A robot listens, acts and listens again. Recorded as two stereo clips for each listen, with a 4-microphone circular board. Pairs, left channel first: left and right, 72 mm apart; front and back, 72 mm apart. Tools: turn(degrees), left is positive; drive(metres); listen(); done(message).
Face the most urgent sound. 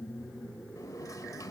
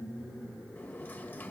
listen()
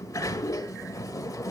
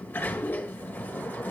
listen()
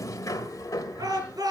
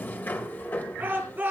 turn(degrees=-115)
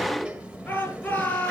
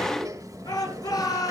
turn(degrees=25)
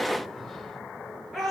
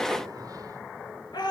done("Found it: a shout, straight ahead.")